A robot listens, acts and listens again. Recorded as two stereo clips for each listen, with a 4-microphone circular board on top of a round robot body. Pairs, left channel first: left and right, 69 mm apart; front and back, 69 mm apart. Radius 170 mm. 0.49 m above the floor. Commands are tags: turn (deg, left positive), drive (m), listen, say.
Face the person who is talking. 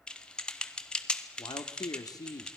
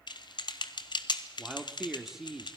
<turn deg="95"/>
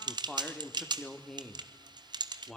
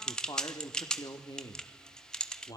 <say>Found it: a man speaking, straight ahead.</say>